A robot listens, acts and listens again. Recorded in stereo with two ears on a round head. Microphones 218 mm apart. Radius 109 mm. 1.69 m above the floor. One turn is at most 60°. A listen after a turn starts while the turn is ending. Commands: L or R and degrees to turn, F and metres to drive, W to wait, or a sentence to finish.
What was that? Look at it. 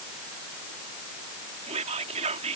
R30
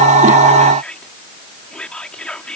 Found it: whispering, straight ahead.